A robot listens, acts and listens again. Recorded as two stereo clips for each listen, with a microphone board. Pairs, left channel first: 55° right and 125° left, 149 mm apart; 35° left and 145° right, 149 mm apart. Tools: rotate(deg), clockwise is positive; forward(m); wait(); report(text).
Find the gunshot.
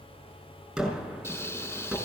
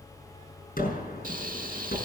rotate(-40)
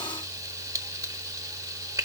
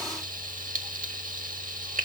report("Facing where the gunshot came from. I can't hear it now.")